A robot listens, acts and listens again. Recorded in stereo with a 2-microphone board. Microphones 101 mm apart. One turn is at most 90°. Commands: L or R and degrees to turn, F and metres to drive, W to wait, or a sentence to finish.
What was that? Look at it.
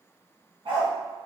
R60
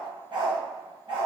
R55
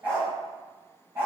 R20
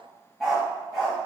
Facing the dog barking.